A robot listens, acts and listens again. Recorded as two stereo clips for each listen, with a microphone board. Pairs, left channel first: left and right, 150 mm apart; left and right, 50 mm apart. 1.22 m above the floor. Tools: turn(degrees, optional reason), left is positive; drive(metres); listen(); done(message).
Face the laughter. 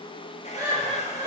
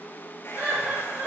turn(degrees=-30, reason="The laughter: about 30° right or 150° right.")
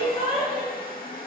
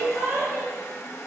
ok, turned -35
done("Facing the laughter.")